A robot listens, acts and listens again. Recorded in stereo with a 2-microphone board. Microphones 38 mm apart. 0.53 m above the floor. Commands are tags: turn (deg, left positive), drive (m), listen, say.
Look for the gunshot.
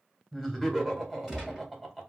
<turn deg="-30"/>
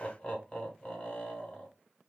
<listen/>
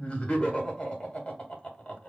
<say>I heard a gunshot, but can't make it out now. It was about 25° left or 145° right.</say>